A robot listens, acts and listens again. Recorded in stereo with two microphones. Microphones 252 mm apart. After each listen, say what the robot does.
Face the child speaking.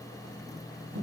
Keep listening.
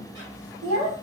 Turn 65° right.
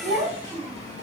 Turn 20° right.
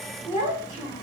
Turn 15° right.
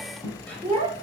Turn 10° right.
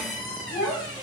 Found it: a child speaking, straight ahead, 2 to 4 m away.